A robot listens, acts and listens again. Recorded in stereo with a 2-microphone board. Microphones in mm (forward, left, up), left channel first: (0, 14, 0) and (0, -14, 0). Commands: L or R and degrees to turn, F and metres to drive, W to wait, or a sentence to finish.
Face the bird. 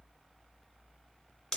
W
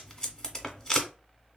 W
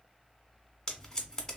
I can't make out a bird to turn to.